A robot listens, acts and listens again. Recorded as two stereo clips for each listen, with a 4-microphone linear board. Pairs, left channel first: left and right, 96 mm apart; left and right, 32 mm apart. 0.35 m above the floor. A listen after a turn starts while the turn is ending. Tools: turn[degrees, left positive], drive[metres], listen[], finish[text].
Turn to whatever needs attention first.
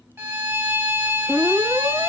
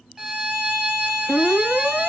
Thought: The alarm: about 75° right or 105° right.
Action: turn[-75]
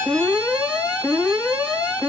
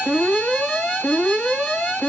Thought: So it is at 10° right.
Action: turn[-10]
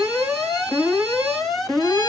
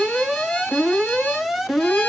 Action: finish[Found it: an alarm, straight ahead, 2 to 4 m away.]